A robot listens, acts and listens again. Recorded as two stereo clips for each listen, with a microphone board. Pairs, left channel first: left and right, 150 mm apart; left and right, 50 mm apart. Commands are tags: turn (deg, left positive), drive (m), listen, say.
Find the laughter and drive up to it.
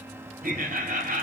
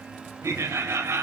<turn deg="-90"/>
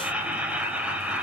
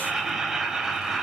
<turn deg="-10"/>
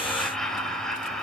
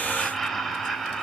<drive m="1.0"/>
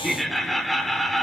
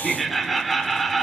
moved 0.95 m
<drive m="1.0"/>
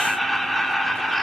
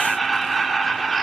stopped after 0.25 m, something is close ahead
<say>Arrived at the laughter, straight ahead.</say>